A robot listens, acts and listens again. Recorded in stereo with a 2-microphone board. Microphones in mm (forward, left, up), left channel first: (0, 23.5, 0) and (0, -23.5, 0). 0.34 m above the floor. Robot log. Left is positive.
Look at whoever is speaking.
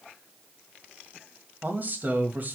note: The man speaking: about 40° right or 140° right.
cmd yaw -40
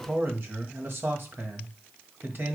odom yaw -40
note: So it is at 90° right.
cmd yaw -90
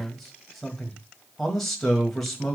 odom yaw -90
end: Found it: a man speaking, straight ahead.